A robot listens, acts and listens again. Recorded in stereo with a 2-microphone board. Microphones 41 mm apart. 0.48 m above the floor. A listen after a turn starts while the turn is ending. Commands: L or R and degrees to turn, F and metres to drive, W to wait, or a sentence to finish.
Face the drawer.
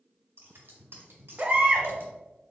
W
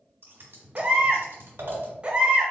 W
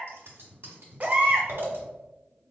I can't make out a drawer to turn to.